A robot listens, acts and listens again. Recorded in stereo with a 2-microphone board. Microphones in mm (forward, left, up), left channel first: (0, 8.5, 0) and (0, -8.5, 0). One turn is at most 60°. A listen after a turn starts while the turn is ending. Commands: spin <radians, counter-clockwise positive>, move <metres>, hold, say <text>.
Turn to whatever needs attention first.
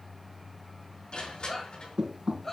spin 0.52
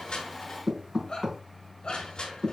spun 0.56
spin 1.05
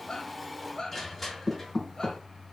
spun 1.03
spin 0.87
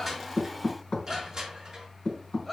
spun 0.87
say Found it: a shout, straight ahead.